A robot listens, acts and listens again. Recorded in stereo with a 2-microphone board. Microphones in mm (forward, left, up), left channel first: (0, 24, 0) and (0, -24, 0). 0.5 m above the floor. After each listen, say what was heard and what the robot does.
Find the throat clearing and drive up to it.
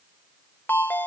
Keep listening.
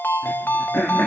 The throat clearing: about 35° left or 145° left. Turn 35° left.
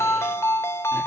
Keep listening.
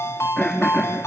Drive 1.0 m forward.
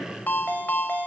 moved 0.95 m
Keep listening.
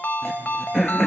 Drive 1.0 m forward.
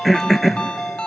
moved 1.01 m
Drive 1.0 m forward.
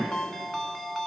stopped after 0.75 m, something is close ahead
Keep listening.
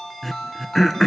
Arrived at the throat clearing, straight ahead.